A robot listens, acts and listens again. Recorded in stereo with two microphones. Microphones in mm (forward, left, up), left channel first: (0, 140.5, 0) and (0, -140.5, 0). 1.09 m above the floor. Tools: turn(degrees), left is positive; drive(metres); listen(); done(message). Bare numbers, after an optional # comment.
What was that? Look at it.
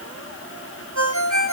turn(-90)
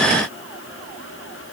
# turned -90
listen()
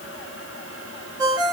# The ringtone is now 15° right.
turn(-15)
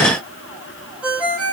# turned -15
done("Found it: a ringtone, straight ahead, 2 to 4 m away.")